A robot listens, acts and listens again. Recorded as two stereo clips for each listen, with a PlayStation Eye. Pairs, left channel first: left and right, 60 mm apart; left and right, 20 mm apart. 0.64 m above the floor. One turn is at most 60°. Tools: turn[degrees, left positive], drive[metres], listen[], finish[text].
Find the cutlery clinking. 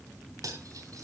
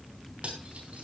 Thought: The cutlery clinking: about 70° right or 110° right.
Action: turn[-60]
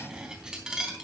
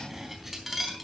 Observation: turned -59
Thought: So it is at 15° right.
Action: turn[-15]
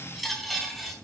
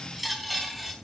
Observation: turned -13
Action: finish[Found it: cutlery clinking, straight ahead.]